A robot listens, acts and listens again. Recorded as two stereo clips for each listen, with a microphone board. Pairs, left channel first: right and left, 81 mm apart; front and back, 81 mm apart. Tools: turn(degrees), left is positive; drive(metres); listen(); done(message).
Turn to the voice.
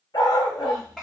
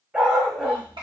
turn(degrees=-175)
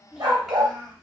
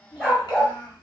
done("Facing the child speaking.")